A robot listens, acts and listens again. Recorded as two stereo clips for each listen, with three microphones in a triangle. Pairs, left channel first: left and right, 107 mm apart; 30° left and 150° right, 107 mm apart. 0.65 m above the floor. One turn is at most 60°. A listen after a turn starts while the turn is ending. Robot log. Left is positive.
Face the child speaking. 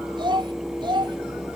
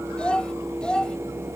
note: The child speaking: 50° right.
cmd yaw -50
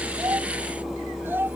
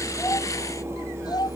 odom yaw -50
note: The child speaking is now 20° right.
cmd yaw -20
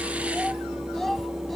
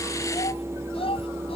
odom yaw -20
end: Found it: a child speaking, straight ahead.